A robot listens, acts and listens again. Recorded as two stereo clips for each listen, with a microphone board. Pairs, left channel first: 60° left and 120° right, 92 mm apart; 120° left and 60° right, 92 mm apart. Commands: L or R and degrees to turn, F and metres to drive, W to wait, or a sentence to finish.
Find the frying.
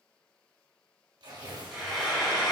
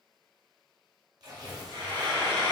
R35
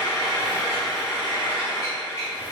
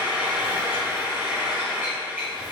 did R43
L10
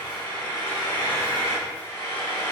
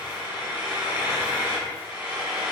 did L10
Found it: frying, straight ahead, 1 to 2 m away.